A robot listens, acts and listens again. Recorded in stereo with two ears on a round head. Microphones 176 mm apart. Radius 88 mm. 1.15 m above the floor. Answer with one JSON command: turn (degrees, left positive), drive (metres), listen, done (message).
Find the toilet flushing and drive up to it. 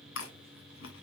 {"listen": true}
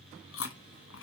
{"listen": true}
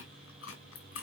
{"done": "I can't make out a toilet flushing, only chewing."}